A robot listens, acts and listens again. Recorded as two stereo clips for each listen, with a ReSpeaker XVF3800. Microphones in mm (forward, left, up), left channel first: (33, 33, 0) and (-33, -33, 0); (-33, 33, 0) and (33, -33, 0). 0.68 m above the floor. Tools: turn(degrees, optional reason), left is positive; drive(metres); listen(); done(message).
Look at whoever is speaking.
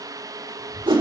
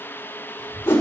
turn(degrees=-85, reason="The child speaking: 85° right.")
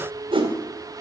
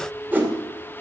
listen()
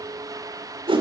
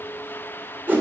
listen()
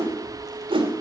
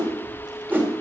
done("Found it: a child speaking, straight ahead, 2 to 4 m away.")